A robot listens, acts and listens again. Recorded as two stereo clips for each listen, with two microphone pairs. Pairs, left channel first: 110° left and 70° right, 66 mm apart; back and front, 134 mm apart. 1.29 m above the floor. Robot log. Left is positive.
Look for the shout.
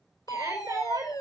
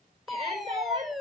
note: The shout: 50° right.
cmd yaw -50
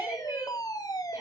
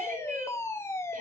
cmd idle
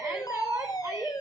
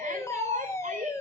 note: The shout is now 25° right.
cmd yaw -25
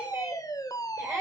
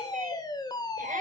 cmd idle
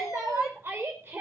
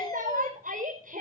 note: The shout is now 15° right.
cmd yaw -15
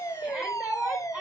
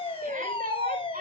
end: Facing the shout.